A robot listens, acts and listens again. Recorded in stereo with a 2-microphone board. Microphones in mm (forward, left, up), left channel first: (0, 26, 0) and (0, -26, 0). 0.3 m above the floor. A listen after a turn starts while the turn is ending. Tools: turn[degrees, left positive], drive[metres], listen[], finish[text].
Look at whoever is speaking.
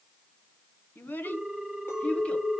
Thought: The child speaking: about 25° left or 155° left.
Action: turn[25]
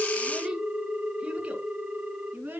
Thought: So it is at 35° right.
Action: turn[-35]
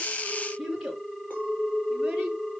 Thought: The child speaking is now 10° right.
Action: turn[-10]
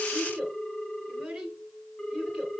Action: finish[Found it: a child speaking, straight ahead.]